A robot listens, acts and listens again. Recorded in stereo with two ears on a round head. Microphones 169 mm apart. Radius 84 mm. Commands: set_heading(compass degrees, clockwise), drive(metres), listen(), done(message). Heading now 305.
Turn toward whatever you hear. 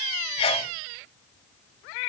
set_heading(275)
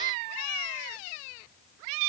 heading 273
listen()
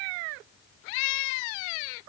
done("I heard a sneeze, but can't make it out now. It was about straight ahead or 120° left.")